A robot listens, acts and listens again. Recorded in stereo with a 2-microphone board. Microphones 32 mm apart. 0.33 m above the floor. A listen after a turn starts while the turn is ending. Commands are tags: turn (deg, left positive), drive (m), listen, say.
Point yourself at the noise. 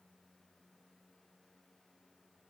<listen/>
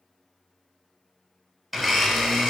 <turn deg="-30"/>
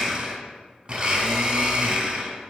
<turn deg="-140"/>
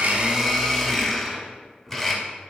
<turn deg="10"/>
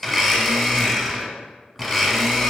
<say>Facing the blender, under 1 m away.</say>